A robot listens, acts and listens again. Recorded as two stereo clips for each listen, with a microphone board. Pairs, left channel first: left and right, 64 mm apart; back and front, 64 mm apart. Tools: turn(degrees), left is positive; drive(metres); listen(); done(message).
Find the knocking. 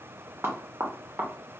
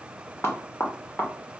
turn(degrees=-135)
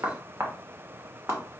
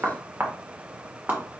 turn(degrees=-55)
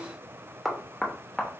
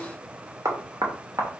done("Found it: knocking, straight ahead, under 1 m away.")